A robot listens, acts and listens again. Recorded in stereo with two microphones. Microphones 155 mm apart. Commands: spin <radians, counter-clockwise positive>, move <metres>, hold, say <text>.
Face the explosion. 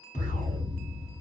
spin 0.96
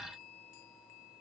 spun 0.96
hold
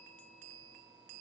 say I heard an explosion, but can't make it out now. It was about straight ahead or 70° left.